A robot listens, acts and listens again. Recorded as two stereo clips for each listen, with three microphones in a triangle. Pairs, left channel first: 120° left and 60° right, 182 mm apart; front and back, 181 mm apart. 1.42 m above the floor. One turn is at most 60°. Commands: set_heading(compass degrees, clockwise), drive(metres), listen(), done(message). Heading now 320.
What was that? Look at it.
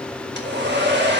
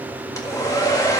set_heading(20)
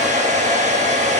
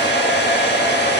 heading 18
set_heading(28)
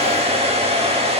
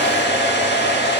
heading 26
done("Facing the hair dryer, 1 to 2 m away.")